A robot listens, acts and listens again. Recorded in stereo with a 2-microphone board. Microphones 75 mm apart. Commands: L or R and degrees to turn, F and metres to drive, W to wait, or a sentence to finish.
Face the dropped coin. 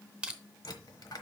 L65
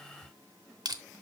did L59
W
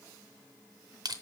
I heard a dropped coin, but can't make it out now. It was about 5° left or 60° left.